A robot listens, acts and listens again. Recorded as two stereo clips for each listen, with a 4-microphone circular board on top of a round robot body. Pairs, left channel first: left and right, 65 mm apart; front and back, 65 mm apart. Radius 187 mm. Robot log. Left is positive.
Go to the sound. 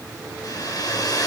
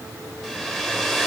note: The hair dryer: 80° left.
cmd yaw +80
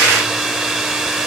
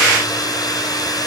note: The hair dryer is now 10° right.
cmd yaw -10
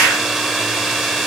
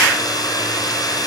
cmd fwd 1.0
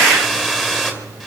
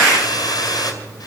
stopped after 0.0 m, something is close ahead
end: Something is in my way. I am facing the hair dryer but have not reached it.